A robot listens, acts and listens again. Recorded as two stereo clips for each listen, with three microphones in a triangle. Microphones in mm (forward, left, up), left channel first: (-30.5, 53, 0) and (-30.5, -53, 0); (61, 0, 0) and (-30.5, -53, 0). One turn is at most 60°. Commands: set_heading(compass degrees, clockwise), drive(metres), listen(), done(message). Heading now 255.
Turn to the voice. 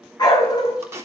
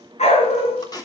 listen()
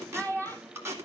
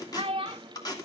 set_heading(195)
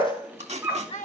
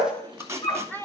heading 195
set_heading(135)
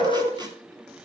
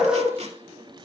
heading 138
set_heading(93)
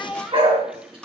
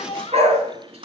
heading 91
done("Found it: a child speaking, straight ahead, 1 to 2 m away.")